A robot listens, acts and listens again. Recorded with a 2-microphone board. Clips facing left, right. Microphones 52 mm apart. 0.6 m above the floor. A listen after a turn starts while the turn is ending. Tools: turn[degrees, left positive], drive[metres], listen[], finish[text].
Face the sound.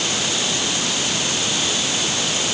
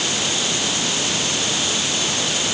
Action: listen[]
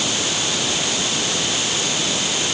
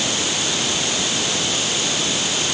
Action: listen[]
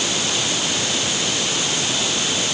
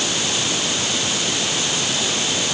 Action: finish[I can't make out anything to turn to.]